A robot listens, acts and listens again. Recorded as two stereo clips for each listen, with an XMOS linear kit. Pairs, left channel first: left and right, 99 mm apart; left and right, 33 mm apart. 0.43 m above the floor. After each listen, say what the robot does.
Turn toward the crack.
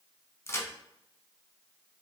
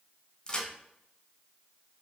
Turn 25° left.
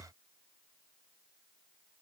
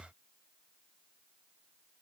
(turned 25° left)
Keep listening.
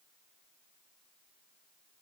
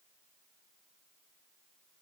I heard a crack, but can't make it out now. It was about straight ahead or 130° left.